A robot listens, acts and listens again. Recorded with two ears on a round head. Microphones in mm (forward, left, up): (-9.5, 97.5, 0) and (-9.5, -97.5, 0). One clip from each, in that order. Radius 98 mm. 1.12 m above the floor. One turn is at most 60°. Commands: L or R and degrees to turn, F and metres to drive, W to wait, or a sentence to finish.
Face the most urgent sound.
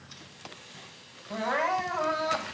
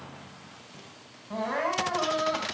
L55
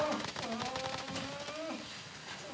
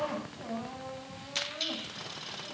L60
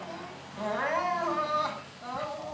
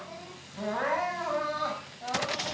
L15
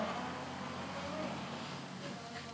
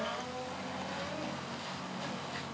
W
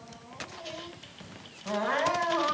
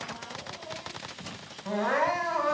Found it: crying, straight ahead.